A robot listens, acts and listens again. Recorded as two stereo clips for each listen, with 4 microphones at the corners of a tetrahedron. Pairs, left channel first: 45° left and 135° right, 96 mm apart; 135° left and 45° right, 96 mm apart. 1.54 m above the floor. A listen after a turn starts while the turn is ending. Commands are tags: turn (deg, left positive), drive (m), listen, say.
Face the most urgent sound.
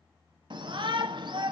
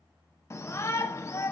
<turn deg="-165"/>
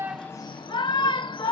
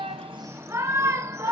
<turn deg="15"/>
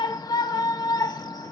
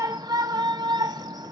<say>Facing the shout.</say>